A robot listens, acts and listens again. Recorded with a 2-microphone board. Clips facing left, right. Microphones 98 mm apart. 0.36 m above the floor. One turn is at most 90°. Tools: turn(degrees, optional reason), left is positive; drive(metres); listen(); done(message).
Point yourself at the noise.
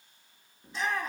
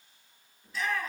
turn(degrees=25, reason="The shout: about 25° left or 155° left.")
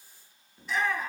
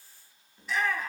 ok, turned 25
done("Facing the shout, over 4 m away.")